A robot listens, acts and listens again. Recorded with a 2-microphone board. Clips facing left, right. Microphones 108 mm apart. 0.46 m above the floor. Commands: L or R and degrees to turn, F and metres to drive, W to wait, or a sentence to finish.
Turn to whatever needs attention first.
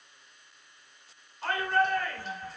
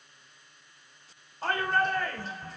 R40
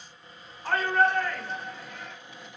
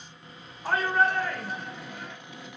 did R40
R10
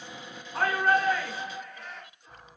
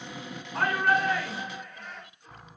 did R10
Facing the shout, 1 to 2 m away.